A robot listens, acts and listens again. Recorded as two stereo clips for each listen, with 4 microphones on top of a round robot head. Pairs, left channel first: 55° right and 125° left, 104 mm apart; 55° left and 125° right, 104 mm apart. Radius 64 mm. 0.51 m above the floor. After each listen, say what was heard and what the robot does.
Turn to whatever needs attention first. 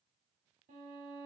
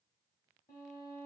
Keep listening.
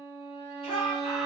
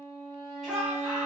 The shout: 40° right. Turn 40° right.
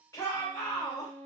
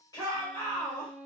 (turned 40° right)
Facing the shout, 1 to 2 m away.